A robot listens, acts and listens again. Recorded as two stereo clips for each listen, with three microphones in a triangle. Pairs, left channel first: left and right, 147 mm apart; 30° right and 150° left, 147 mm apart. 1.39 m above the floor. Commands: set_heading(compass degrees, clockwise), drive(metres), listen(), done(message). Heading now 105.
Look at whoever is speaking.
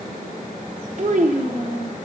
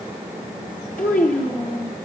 set_heading(160)
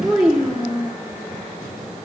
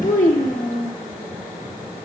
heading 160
done("Facing the child speaking, under 1 m away.")